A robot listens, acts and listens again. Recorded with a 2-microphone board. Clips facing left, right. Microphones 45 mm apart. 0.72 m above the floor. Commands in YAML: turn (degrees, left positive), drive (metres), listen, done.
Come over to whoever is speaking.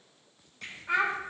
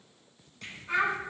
turn: 50
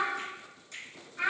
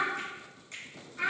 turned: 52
drive: 1.0
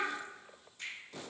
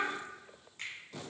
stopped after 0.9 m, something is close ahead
listen: true
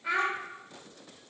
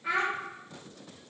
done: "I am next to the child speaking."